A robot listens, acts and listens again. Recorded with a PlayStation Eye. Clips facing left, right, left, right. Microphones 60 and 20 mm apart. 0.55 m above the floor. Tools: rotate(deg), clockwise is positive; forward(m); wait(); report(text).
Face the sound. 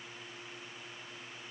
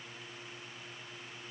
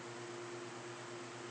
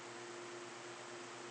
wait()
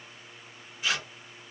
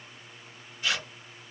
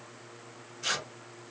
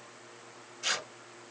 rotate(-30)
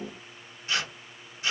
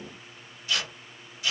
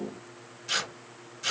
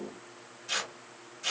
rotate(-145)
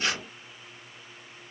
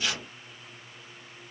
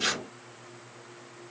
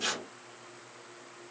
rotate(-45)
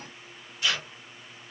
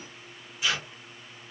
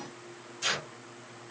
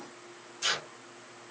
rotate(10)
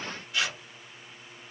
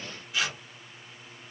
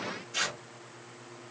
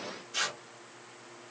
report("Facing the tearing paper.")